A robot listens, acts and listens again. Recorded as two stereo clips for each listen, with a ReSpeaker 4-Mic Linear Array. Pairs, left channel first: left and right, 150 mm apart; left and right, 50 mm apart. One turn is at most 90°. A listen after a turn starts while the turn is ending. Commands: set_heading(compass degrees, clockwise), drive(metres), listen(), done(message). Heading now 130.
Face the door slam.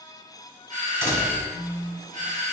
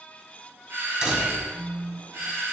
set_heading(145)
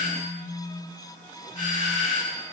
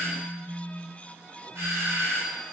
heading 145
listen()
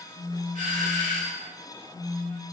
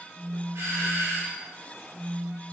done("I heard a door slam, but can't make it out now. It was about straight ahead or 150° right.")